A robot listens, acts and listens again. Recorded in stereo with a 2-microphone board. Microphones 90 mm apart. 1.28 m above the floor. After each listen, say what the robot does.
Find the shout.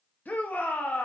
Turn 15° left.
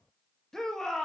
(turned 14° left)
Facing the shout, 1 to 2 m away.